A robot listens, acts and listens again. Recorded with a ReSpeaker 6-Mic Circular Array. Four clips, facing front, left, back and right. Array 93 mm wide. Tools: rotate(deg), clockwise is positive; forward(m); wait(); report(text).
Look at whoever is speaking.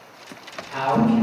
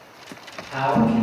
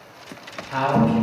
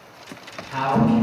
rotate(-160)
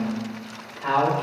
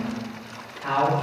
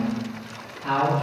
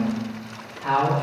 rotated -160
rotate(-20)
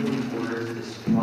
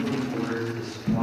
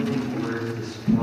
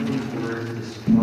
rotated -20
rotate(10)
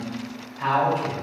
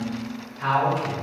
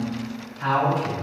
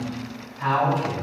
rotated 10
rotate(10)
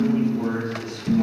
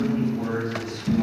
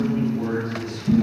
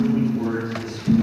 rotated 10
report("Found it: a man speaking, straight ahead.")